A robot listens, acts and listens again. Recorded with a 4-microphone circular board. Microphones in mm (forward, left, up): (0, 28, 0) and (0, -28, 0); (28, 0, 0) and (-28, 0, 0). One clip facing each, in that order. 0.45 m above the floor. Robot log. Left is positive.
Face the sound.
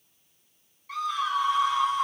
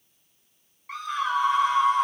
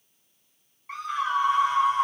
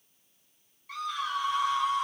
note: The scream: 45° right.
cmd yaw -45
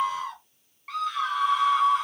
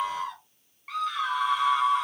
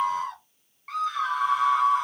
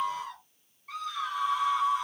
end: Found it: a scream, straight ahead, 1 to 2 m away.